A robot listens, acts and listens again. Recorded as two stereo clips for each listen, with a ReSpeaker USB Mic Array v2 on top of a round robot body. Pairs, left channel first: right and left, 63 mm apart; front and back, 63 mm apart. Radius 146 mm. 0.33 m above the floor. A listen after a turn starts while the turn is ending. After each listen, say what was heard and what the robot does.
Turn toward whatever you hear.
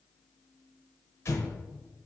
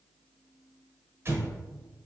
The explosion: 135° right. Turn 135° right.
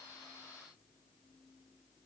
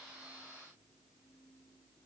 Facing where the explosion came from. I can't hear it now.